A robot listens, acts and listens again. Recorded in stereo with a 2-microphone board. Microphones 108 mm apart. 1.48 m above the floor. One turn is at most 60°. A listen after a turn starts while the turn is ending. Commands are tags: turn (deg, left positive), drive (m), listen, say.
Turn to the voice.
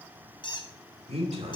<turn deg="-60"/>
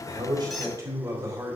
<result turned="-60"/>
<turn deg="-35"/>
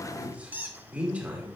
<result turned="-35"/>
<turn deg="-15"/>
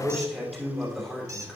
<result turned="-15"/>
<say>Found it: a man speaking, straight ahead.</say>